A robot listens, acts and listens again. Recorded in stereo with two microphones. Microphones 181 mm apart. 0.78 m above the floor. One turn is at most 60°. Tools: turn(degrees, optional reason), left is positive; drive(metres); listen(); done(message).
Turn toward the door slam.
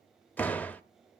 turn(degrees=30)
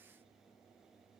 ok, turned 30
listen()
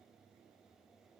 done("I heard a door slam, but can't make it out now. It was about 20° right or 140° left.")